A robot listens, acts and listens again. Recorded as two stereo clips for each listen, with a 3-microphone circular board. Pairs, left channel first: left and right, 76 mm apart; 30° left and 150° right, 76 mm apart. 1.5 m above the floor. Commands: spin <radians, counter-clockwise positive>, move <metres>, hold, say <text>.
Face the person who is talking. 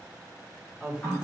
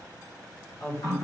spin -0.17
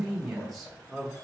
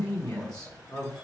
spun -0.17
say Facing the woman speaking, 1 to 2 m away.